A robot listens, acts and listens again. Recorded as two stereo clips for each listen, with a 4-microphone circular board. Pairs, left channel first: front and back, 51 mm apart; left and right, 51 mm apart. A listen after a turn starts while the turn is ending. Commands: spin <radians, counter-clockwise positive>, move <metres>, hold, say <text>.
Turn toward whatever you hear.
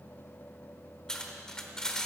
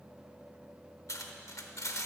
spin 1.40
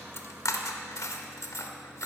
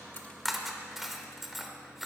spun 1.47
say Found it: cutlery clinking, straight ahead, under 1 m away.